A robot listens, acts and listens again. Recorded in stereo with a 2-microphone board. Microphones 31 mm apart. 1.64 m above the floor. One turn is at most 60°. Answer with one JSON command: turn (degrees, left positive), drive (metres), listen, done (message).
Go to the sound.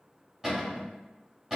{"turn": -15}
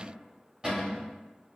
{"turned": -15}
{"turn": -60}
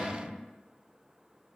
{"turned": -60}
{"turn": -60}
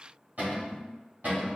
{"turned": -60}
{"turn": -60}
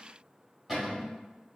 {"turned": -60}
{"drive": 1.0}
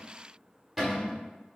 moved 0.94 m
{"drive": 1.0}
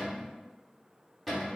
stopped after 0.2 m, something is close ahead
{"done": "I am next to the cupboard door."}